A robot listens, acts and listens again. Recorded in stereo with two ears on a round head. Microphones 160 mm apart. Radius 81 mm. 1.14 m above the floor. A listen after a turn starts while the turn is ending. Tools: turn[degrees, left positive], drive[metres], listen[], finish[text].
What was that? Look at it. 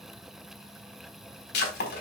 Thought: The breaking glass: about 60° left or 120° left.
Action: turn[60]
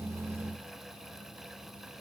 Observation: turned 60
Action: listen[]
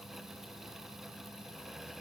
Action: finish[I heard breaking glass, but can't make it out now. It was about straight ahead or 60° left.]